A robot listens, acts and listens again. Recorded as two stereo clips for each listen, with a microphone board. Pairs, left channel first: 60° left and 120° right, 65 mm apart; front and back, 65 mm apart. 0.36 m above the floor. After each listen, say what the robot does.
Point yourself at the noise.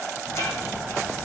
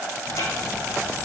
Turn 25° left.
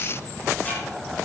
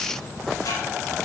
Facing the ticking.